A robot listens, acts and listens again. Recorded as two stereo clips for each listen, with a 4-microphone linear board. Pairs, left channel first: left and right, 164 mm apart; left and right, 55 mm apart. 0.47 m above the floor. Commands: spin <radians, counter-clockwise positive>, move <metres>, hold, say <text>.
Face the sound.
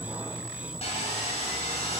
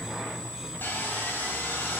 spin 0.70
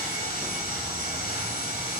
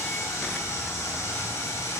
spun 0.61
spin 1.75
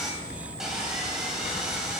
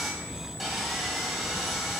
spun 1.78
say Found it: sawing, straight ahead.